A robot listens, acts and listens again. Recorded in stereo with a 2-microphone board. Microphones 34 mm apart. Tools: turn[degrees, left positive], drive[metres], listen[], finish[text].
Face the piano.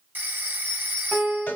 Thought: The piano: about 20° right or 160° right.
Action: turn[-20]
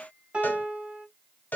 Thought: So it is at 140° right.
Action: turn[-140]
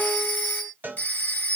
Action: listen[]
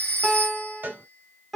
Action: finish[Found it: a piano, straight ahead.]